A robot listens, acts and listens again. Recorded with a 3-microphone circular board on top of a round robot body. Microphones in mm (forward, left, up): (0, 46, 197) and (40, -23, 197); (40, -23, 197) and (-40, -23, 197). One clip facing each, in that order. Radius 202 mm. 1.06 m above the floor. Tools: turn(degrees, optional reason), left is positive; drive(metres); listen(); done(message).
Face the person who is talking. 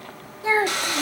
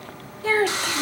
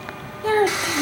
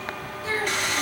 turn(degrees=50, reason="The child speaking: 50° left.")
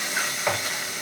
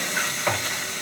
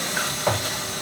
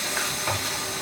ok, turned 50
listen()
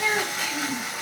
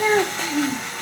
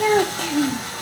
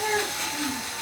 done("Found it: a child speaking, straight ahead.")